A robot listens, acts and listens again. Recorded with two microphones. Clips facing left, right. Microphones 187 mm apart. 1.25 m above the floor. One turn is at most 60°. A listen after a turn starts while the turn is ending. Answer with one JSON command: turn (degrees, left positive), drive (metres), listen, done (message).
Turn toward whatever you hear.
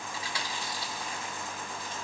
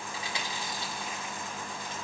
{"turn": -20}
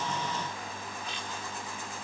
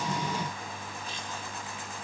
{"listen": true}
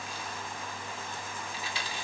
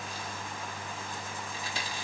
{"turn": -60}
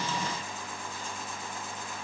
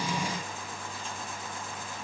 {"turn": -60}
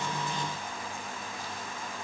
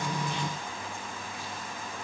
{"turn": -15}
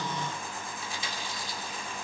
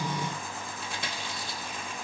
{"turn": -60}
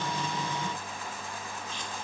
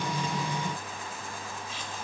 {"listen": true}
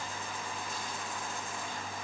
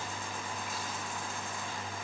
{"listen": true}
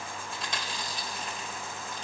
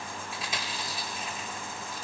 {"done": "Facing the chewing."}